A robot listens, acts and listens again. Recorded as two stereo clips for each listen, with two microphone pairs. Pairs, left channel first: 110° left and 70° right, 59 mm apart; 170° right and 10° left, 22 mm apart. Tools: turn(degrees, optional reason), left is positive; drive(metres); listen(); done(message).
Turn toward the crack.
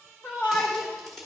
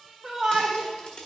turn(degrees=-165, reason="The crack: 165° right.")
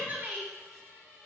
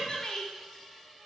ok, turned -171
done("I heard a crack from this way, but can't make it out now.")